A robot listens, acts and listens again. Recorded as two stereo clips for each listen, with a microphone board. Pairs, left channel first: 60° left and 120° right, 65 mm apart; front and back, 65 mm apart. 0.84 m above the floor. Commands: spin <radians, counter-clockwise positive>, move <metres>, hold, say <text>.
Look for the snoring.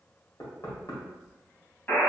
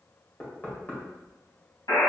hold
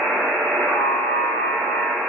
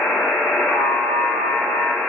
hold
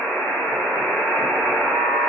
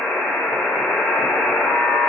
say I can't make out snoring, only knocking and a buzzer.